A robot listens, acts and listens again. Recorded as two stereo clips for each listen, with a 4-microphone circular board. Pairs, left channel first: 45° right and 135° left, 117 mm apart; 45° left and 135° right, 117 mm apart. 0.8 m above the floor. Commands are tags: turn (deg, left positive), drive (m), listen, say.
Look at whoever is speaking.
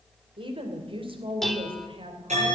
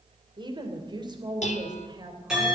<turn deg="170"/>
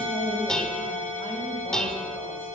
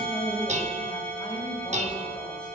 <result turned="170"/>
<say>Found it: a woman speaking, straight ahead, 2 to 4 m away.</say>